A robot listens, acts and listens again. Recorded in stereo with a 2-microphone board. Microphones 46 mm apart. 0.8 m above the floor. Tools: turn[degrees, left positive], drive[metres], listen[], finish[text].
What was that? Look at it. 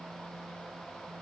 Action: listen[]
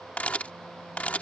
Thought: The camera shutter: about 30° left or 150° left.
Action: turn[30]
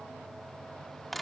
Action: finish[Facing the camera shutter.]